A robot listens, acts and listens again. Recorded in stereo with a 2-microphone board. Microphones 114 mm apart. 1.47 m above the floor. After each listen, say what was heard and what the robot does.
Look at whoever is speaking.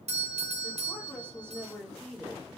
Turn 30° left.
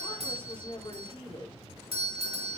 So it is at 135° left. Turn 135° left.
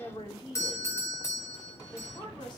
The woman speaking is now 40° left. Turn 40° left.
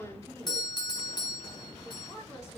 The woman speaking is now 25° left. Turn 25° left.
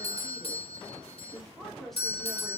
Found it: a woman speaking, straight ahead, over 4 m away.